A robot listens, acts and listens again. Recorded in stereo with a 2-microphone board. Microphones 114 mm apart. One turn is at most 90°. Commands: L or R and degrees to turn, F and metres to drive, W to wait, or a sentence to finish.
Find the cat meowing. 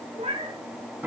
R65
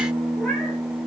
W
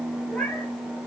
W
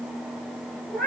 Found it: a cat meowing, straight ahead, over 4 m away.